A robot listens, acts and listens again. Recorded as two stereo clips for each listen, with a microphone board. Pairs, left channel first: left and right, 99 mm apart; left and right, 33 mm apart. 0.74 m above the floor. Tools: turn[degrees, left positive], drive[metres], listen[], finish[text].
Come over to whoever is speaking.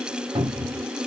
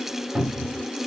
Action: listen[]
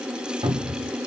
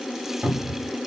Action: listen[]
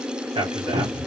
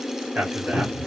Thought: The man speaking: about 60° right or 120° right.
Action: turn[-60]
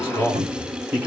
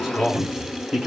Thought: So it is at 25° right.
Action: turn[-25]
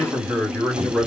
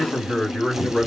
Action: drive[1.0]
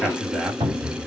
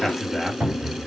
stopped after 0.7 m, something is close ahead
Thought: The man speaking is now 10° right.
Action: turn[-10]
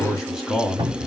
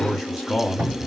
Action: finish[I am next to the man speaking.]